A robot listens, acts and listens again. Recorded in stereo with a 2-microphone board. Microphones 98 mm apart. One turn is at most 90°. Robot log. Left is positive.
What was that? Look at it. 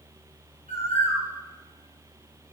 cmd yaw +90
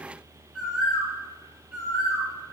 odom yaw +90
end: Facing the bird.